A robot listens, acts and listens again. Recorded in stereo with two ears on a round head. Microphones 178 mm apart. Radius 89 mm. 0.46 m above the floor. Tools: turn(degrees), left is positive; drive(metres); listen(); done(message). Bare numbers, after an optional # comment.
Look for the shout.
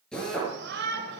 # The shout: about 60° right or 120° right.
turn(-60)
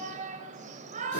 # So it is at 45° right.
turn(-45)
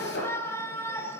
# The shout is now 15° left.
turn(15)
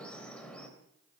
done("Found it: a shout, straight ahead.")